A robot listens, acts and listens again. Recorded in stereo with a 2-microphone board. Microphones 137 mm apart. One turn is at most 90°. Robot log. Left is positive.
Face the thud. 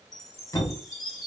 note: The thud: about 25° left or 155° left.
cmd yaw +25
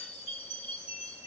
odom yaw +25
cmd idle
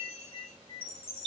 end: I heard a thud, but can't make it out now. It was about straight ahead or 130° left.